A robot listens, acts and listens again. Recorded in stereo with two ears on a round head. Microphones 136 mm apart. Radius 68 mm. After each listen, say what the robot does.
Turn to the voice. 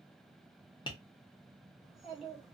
Turn 30° left.
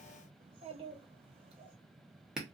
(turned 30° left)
Turn 35° right.
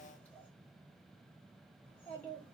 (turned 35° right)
Turn 10° left.
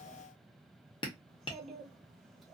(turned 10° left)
Facing the child speaking, 1 to 2 m away.